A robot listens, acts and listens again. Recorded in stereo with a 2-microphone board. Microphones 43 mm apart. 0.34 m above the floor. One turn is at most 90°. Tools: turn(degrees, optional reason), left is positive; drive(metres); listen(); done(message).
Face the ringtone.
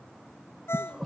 turn(degrees=90)
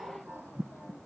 listen()
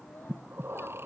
listen()
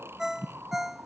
turn(degrees=-10, reason="The ringtone is now 10° right.")
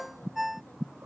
done("Facing the ringtone.")